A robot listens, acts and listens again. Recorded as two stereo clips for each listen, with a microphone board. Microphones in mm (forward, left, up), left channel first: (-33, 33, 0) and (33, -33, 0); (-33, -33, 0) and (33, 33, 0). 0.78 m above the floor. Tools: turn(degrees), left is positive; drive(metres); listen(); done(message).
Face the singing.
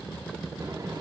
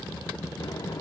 listen()
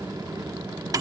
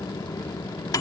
listen()
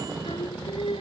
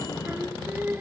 turn(degrees=110)
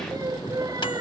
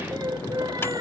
done("Found it: singing, straight ahead.")